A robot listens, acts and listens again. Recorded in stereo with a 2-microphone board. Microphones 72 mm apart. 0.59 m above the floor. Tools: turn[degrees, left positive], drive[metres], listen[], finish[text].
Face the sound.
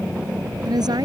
Thought: The woman speaking: about 75° right or 105° right.
Action: turn[-75]
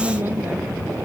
Thought: So it is at 30° right.
Action: turn[-30]
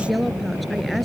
Action: finish[Found it: a woman speaking, straight ahead.]